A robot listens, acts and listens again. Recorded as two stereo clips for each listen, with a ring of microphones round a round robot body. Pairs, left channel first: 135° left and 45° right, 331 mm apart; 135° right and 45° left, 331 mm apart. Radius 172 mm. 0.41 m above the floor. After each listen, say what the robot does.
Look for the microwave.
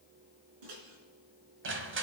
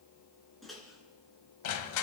Turn 45° right.
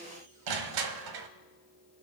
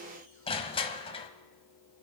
Keep listening.
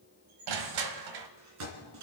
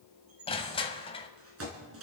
Found it: a microwave, straight ahead, 2 to 4 m away.